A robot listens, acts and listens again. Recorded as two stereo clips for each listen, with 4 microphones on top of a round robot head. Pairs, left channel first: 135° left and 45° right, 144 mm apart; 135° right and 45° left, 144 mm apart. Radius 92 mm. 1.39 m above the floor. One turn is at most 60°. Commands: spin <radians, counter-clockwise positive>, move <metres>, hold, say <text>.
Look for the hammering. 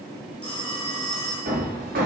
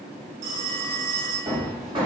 spin -0.26
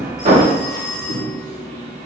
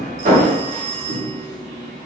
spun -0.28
say Facing the hammering.